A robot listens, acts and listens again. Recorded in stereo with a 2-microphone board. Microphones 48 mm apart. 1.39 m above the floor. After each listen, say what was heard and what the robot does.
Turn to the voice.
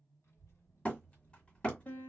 Turn 90° left.
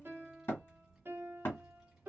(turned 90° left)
Found it: a child speaking, straight ahead.